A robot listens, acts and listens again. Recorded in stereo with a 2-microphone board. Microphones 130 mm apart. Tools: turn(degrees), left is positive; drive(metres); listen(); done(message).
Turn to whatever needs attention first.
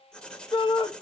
turn(degrees=40)
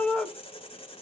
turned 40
done("Found it: a shout, straight ahead, 1 to 2 m away.")